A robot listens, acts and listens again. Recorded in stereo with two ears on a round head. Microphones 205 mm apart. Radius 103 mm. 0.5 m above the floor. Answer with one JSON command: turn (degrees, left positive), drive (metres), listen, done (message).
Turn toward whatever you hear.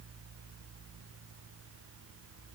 {"listen": true}
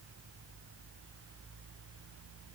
{"listen": true}
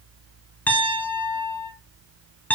{"turn": 30}
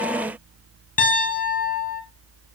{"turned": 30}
{"turn": 140}
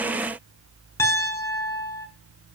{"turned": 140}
{"turn": 10}
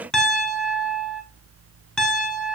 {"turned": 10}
{"done": "Found it: a piano, straight ahead."}